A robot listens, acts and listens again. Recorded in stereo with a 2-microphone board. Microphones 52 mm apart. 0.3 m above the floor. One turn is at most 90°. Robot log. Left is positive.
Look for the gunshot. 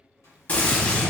note: The gunshot: about 35° left or 145° left.
cmd yaw +35
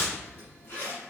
note: So it is at 110° left.
cmd yaw +90
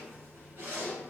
note: Nothing new. It was at 20° left.
cmd yaw +20
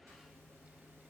end: I heard a gunshot from this way, but can't make it out now.